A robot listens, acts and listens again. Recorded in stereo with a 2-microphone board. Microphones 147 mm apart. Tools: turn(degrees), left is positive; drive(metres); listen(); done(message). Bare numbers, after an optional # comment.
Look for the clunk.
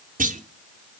turn(-90)
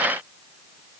done("Facing where the clunk came from. I can't hear it now.")